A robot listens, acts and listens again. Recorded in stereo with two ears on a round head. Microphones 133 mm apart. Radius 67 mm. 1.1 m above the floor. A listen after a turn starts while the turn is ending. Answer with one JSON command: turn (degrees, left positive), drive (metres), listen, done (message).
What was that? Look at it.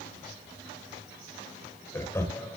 {"turn": 20}
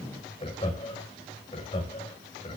{"turn": 35}
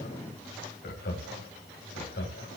{"turn": 105}
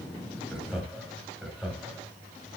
{"done": "Facing the laughter."}